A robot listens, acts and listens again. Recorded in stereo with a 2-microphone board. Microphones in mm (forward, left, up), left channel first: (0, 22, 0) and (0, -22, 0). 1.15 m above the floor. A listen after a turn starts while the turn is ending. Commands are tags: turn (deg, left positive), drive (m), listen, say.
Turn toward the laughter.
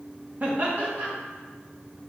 <turn deg="-35"/>
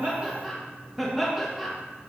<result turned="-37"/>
<say>Found it: laughter, straight ahead, 1 to 2 m away.</say>